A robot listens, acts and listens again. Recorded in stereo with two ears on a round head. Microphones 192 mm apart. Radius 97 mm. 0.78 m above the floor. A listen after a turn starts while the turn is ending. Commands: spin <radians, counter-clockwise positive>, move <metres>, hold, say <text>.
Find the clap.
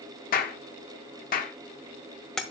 spin 0.70
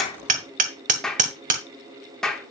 say Found it: a clap, straight ahead, 1 to 2 m away.